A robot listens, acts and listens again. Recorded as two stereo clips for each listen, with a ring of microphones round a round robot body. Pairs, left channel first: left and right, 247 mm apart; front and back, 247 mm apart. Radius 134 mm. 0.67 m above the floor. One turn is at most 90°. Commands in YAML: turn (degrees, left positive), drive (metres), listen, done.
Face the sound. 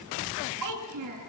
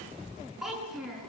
turn: -90
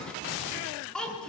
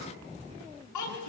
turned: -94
done: "Found it: a child speaking, straight ahead, over 4 m away."